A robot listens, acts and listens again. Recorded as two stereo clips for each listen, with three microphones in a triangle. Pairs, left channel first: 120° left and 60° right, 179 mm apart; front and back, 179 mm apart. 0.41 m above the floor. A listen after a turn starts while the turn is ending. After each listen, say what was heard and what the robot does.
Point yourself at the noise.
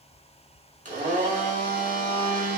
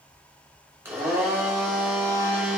The blender: 105° right. Turn 105° right.
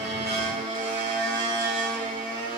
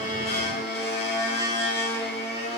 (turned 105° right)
The blender is now 20° right. Turn 20° right.
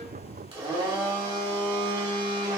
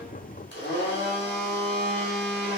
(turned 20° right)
Found it: a blender, straight ahead, 1 to 2 m away.